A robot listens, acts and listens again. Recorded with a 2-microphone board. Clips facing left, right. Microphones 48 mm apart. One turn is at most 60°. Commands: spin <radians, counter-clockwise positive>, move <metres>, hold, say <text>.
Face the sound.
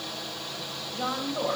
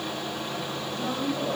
spin 0.61
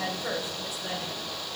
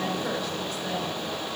say Facing the woman speaking.